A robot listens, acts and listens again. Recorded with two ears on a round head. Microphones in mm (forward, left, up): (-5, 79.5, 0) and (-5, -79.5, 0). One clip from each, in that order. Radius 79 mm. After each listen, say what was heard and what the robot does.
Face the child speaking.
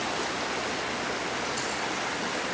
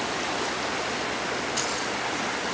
Keep listening.
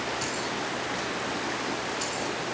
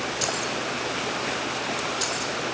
Keep listening.
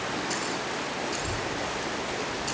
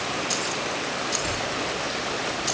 Turn 30° right.
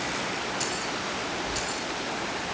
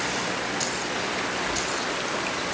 So it is at 140° right. Turn 140° right.
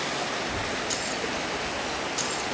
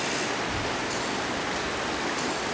The child speaking is now 15° right. Turn 15° right.
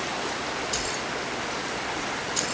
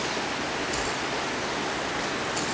Found it: a child speaking, straight ahead, over 4 m away.